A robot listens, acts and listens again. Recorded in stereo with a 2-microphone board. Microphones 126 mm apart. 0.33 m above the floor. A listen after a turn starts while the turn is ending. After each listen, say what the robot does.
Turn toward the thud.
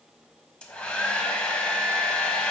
Keep listening.
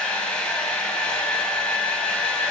Keep listening.
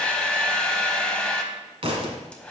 Turn 50° right.
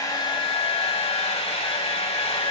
Keep listening.
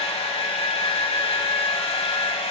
I heard a thud, but can't make it out now. It was about straight ahead or 80° right.